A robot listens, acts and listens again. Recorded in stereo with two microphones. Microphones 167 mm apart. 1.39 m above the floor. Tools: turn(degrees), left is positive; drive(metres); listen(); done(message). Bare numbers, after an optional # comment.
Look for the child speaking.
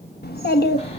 # The child speaking: about 70° left or 110° left.
turn(70)
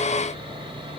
listen()
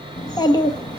# So it is at 25° left.
turn(25)
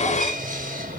listen()
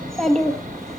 done("Facing the child speaking.")